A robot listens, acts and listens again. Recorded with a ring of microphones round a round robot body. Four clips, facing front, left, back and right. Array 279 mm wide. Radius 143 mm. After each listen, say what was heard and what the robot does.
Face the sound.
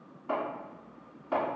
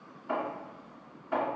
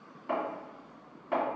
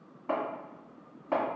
The chopping: 105° right. Turn 105° right.
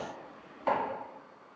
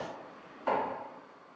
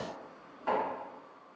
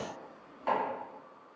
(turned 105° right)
Found it: chopping, straight ahead, 2 to 4 m away.